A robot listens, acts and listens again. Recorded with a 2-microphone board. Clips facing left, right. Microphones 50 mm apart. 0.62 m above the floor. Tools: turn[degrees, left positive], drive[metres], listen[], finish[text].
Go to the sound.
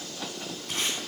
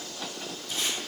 Thought: The tape being pulled: about 60° left or 120° left.
Action: turn[60]
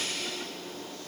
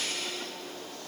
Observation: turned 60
Action: listen[]
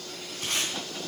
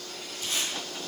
Thought: So it is at 60° left.
Action: turn[60]
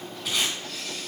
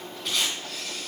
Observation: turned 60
Action: drive[1.0]
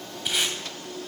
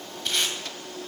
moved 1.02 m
Thought: The tape being pulled is now 10° left.
Action: turn[10]
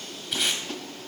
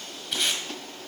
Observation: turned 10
Action: drive[1.0]
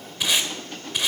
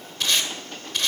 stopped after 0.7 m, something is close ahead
Thought: The tape being pulled is now 10° left.
Action: turn[10]
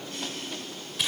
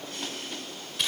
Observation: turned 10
Action: finish[Arrived at the tape being pulled, straight ahead.]